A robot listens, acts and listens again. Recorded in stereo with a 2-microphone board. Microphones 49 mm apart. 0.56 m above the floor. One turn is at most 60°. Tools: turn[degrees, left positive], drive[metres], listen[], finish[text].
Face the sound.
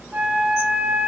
Thought: The flute: about 35° right or 145° right.
Action: turn[-35]
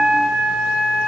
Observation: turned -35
Action: finish[Facing the flute, 1 to 2 m away.]